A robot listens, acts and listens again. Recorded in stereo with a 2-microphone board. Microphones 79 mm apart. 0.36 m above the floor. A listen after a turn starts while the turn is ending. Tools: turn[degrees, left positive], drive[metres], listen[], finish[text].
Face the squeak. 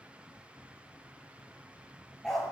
Action: listen[]
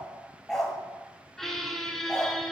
Action: turn[30]
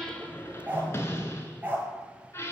Thought: So it is at 145° left.
Action: turn[145]
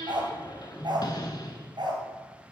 Thought: The squeak is now 60° left.
Action: turn[60]
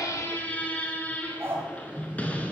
Thought: The squeak is now 20° left.
Action: turn[20]
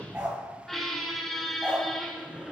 Action: finish[Facing the squeak.]